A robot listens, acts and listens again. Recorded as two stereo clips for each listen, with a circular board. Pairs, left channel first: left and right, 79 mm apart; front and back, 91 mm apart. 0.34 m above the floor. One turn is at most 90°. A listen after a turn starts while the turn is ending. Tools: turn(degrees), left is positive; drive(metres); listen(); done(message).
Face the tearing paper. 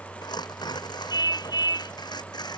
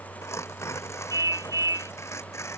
turn(degrees=60)
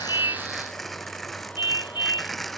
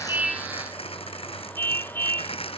done("Found it: tearing paper, straight ahead.")